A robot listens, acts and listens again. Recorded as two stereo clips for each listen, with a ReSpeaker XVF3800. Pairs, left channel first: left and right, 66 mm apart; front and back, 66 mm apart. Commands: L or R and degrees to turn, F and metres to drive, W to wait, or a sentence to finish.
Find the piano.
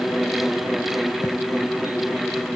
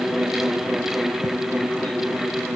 W
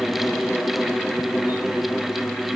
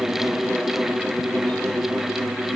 W
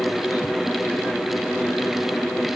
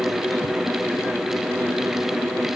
I can't make out a piano to turn to.